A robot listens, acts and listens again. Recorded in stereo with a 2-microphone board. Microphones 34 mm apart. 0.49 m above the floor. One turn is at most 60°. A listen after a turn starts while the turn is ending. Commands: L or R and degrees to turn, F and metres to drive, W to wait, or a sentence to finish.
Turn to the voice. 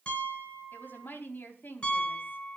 L60
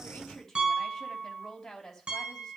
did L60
L10
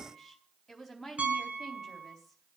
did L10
Found it: a woman speaking, straight ahead.